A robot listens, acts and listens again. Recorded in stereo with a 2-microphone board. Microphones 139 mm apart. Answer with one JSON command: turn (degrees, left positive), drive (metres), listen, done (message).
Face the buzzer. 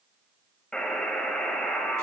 {"turn": 30}
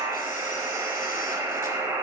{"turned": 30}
{"turn": -20}
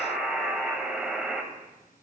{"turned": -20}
{"done": "Facing the buzzer, under 1 m away."}